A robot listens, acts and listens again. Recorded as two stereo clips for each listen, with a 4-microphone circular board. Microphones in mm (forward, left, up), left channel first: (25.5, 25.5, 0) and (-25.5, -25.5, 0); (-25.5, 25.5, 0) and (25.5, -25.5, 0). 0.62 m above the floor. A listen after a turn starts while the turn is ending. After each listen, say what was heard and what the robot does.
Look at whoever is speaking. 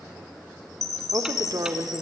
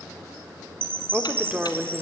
The woman speaking: 115° right. Turn 115° right.
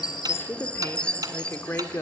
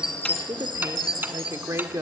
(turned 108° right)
Found it: a woman speaking, straight ahead.